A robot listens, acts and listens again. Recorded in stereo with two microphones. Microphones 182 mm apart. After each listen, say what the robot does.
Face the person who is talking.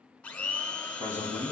Turn 40° right.
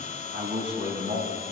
Turn 100° right.
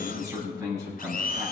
Turn 15° right.
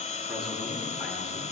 Keep listening.
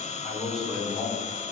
Found it: a man speaking, straight ahead.